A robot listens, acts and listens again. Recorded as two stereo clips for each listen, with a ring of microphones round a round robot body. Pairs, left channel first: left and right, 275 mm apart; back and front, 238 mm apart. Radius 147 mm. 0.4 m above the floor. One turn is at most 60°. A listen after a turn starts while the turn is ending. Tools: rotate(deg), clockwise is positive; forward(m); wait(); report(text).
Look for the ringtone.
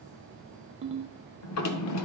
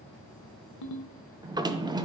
rotate(60)
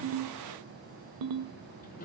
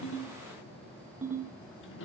rotate(60)
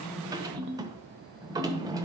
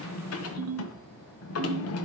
rotate(40)
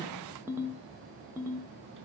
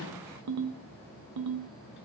rotate(10)
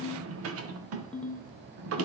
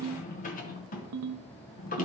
report("Found it: a ringtone, straight ahead, under 1 m away.")